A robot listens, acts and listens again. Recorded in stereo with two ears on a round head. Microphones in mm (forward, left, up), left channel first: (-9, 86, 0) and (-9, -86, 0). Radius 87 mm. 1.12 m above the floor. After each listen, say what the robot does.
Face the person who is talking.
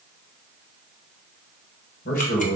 Turn 45° left.
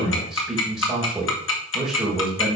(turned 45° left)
Found it: a man speaking, straight ahead.